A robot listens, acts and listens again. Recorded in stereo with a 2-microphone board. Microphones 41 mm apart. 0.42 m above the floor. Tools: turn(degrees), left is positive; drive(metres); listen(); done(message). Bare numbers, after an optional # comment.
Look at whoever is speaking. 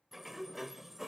listen()
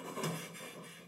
listen()
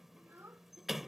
# The child speaking: about 70° right or 110° right.
turn(-70)
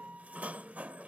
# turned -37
listen()
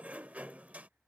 listen()
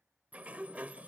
done("I heard a child speaking, but can't make it out now. It was about 30° right or 75° right.")